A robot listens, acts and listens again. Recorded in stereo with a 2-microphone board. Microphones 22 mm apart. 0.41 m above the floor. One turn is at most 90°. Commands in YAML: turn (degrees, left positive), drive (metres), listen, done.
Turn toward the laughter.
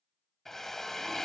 listen: true
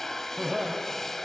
turn: -35
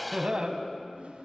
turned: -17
turn: -90
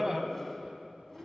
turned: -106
turn: -25
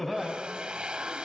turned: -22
done: "Facing the laughter."